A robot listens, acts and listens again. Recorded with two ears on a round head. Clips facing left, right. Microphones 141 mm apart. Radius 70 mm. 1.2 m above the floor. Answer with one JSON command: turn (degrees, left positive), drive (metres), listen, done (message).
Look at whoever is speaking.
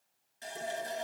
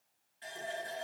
{"listen": true}
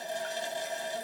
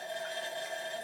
{"listen": true}
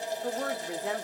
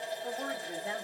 {"turn": 75}
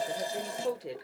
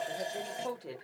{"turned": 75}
{"turn": 20}
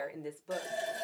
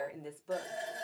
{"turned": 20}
{"done": "Facing the woman speaking."}